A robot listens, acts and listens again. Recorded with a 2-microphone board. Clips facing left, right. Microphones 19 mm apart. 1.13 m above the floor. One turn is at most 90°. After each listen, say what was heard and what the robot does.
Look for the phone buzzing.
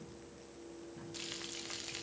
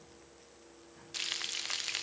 Keep listening.
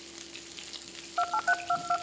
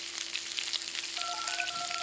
Turn 90° left.
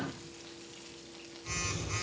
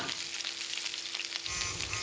Found it: a phone buzzing, straight ahead, over 4 m away.